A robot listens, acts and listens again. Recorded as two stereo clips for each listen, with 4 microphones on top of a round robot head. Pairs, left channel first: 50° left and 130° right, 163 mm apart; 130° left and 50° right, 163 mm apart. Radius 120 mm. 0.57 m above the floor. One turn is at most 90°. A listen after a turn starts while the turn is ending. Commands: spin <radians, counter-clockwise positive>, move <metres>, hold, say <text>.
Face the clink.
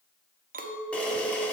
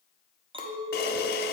spin -1.57
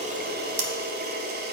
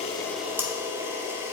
spin -0.26
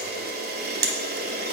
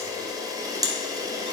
hold
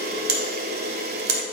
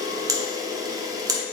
say I heard a clink from this way, but can't make it out now.